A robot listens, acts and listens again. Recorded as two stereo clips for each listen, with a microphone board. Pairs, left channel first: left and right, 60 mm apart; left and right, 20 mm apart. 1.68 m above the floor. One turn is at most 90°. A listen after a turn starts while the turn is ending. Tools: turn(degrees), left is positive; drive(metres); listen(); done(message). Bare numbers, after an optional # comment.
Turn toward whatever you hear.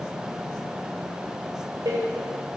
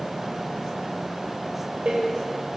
turn(-90)
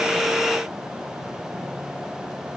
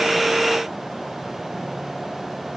done("Facing where the door slam came from. I can't hear it now.")